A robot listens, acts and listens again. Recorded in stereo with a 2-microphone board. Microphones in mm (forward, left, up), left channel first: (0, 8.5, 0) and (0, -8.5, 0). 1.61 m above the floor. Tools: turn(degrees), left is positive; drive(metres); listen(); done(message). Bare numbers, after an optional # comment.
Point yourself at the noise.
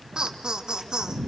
# The laughter: about 55° right or 125° right.
turn(-55)
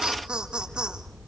# So it is at 85° right.
turn(-85)
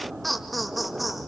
done("Facing the laughter.")